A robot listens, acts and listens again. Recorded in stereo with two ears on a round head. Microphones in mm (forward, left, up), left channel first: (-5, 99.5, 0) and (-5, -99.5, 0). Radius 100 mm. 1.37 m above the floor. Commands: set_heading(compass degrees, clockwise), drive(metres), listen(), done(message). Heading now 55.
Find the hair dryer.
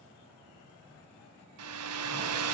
set_heading(145)
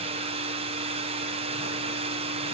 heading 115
set_heading(145)
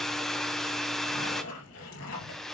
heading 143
done("Found it: a hair dryer, straight ahead.")